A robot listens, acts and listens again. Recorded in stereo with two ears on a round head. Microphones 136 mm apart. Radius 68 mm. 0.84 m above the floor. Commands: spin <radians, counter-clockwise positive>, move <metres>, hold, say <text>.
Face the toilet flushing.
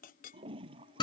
spin -0.61
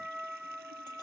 hold
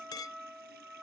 hold
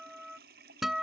spin -1.92
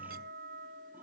hold
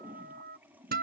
spin -0.17
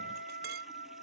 hold
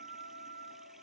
hold
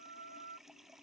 say Facing the toilet flushing.